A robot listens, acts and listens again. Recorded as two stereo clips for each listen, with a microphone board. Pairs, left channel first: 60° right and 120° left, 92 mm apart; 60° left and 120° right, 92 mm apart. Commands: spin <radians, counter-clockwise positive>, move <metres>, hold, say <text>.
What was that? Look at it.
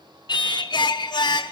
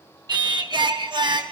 spin -1.57
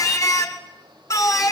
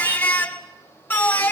say Found it: singing, straight ahead, 1 to 2 m away.